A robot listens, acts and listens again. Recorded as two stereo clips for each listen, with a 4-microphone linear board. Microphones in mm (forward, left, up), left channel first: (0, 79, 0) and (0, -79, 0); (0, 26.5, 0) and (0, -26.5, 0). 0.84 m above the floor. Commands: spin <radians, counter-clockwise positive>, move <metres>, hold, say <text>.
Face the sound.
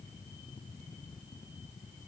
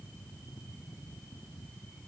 hold
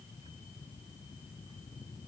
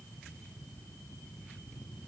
hold
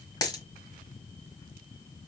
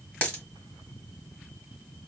spin 0.44
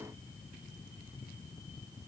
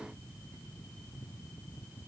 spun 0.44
hold
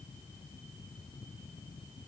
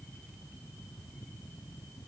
say I heard a dropped coin, but can't make it out now. It was about straight ahead or 130° left.